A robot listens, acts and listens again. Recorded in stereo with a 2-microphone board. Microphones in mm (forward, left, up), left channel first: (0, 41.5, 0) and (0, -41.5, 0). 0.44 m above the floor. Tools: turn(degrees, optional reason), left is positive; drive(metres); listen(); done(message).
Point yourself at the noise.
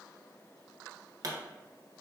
turn(degrees=-45, reason="The pop: about 45° right or 135° right.")
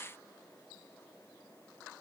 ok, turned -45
listen()
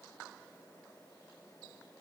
done("I heard a pop, but can't make it out now. It was about straight ahead or 90° right.")